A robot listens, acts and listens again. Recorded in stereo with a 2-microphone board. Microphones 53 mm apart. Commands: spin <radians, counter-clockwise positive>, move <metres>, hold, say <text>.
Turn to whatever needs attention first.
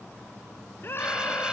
spin 0.70
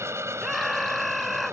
say Found it: a scream, straight ahead.